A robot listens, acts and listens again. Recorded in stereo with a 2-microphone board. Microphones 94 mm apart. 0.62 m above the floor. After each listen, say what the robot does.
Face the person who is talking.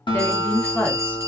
Turn 15° left.
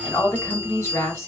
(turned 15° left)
Turn 150° left.
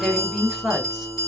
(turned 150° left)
Turn 10° right.
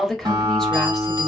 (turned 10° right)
Facing the woman speaking.